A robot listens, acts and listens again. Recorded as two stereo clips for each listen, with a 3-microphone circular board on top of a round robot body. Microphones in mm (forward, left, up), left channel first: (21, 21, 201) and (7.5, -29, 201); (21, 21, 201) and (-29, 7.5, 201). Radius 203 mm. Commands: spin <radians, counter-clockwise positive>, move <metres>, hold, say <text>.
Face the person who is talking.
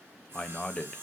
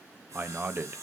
spin 2.44
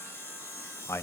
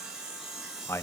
spin 0.79
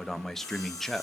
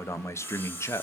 spin -0.17
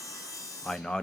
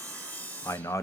say Found it: a man speaking, straight ahead, 1 to 2 m away.